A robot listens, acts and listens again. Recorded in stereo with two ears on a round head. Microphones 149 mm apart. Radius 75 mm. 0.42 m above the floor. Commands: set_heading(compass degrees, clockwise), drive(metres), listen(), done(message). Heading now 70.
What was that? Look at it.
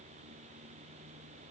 listen()
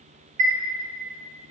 set_heading(115)
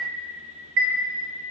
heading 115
set_heading(195)
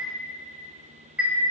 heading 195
set_heading(205)
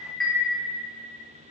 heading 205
done("Facing the chime.")